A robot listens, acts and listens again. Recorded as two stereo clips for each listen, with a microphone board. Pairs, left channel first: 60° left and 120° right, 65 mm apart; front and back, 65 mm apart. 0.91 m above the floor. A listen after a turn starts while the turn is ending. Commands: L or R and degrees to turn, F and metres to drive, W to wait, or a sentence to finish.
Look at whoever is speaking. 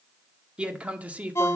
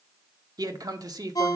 L175
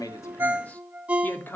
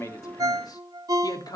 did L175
Found it: a man speaking, straight ahead, 1 to 2 m away.